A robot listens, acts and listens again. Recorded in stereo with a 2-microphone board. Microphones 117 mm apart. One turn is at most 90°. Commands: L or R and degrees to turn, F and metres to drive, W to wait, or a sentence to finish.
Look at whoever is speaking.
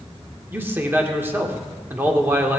R20
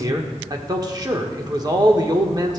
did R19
R90
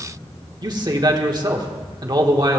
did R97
R45
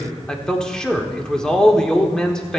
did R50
Facing the man speaking, 1 to 2 m away.